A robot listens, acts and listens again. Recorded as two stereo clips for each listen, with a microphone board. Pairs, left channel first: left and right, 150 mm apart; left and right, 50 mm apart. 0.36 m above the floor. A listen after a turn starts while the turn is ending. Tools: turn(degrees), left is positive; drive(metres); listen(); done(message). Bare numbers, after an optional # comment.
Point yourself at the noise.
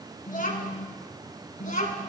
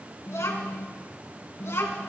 # The child speaking: about 60° left or 120° left.
turn(60)
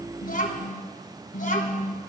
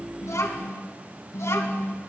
# So it is at 65° left.
turn(65)
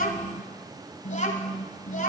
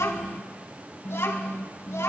# The child speaking is now 60° left.
turn(60)
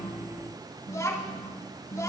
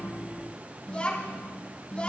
# The child speaking is now 20° left.
turn(20)
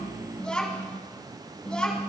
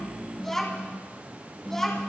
done("Found it: a child speaking, straight ahead.")